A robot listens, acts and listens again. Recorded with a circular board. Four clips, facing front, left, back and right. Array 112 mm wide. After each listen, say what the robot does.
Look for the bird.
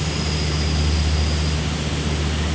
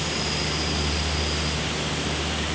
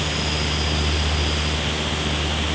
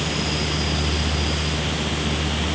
Keep listening.
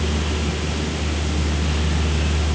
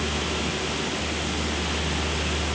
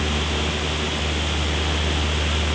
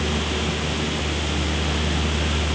Keep listening.
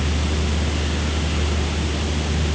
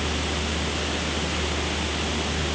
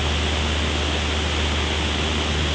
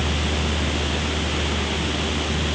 I can't make out a bird to turn to.